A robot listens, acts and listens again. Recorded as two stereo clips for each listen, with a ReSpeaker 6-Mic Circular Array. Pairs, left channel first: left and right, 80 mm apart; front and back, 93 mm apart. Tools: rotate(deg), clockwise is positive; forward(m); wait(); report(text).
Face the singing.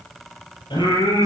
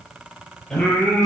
rotate(-85)
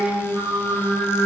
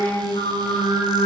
report("Facing the singing.")